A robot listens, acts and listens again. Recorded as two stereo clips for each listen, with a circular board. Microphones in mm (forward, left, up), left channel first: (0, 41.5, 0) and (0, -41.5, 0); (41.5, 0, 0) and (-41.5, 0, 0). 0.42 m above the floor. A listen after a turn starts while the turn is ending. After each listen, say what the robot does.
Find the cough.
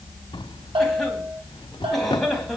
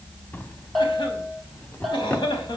Found it: a cough, straight ahead.